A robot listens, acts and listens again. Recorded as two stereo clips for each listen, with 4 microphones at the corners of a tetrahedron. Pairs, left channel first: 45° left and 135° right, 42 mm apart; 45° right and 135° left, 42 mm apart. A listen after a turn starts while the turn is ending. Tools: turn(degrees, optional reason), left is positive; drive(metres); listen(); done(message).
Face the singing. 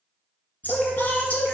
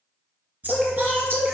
turn(degrees=100, reason="The singing: 100° left.")
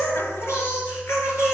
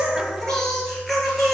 turn(degrees=45, reason="The singing is now 45° left.")
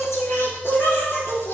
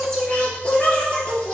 turn(degrees=20, reason="The singing is now 20° left.")
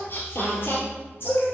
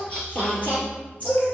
turn(degrees=15, reason="The singing is now 15° left.")
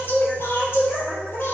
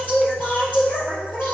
done("Facing the singing.")